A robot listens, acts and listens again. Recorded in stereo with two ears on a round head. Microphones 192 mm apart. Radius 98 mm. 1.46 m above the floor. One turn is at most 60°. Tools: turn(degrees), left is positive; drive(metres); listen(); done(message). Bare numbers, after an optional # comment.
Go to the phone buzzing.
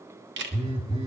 # The phone buzzing: about 25° right or 155° right.
turn(-25)
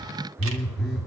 drive(1.0)
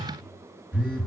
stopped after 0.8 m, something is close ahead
done("Blocked. The phone buzzing is further on, straight ahead.")